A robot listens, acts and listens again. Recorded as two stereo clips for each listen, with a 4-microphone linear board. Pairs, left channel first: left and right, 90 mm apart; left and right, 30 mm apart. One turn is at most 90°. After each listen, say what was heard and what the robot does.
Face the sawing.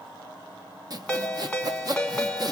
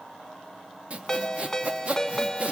The sawing: about 45° right or 135° right. Turn 45° right.
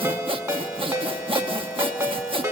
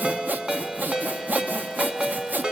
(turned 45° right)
So it is at 90° right. Turn 90° right.
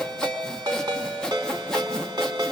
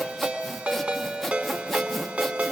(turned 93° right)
Found it: sawing, straight ahead.